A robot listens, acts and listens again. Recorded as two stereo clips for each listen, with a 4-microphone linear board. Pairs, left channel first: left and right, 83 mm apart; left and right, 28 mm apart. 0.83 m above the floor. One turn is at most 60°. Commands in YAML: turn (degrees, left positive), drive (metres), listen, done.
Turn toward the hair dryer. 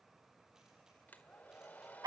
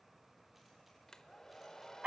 turn: 20
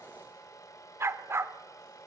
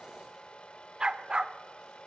turn: 60
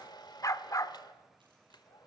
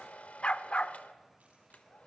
turn: 60
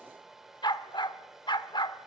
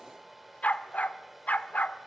done: "Found it: a hair dryer, straight ahead."